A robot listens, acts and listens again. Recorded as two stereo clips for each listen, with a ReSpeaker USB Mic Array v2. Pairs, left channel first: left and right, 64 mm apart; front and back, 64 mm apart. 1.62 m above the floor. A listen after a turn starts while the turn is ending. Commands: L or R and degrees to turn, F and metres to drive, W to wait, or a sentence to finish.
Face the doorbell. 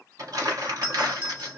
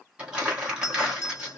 R25
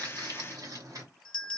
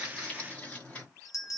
L10
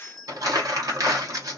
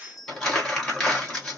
Facing the doorbell, 1 to 2 m away.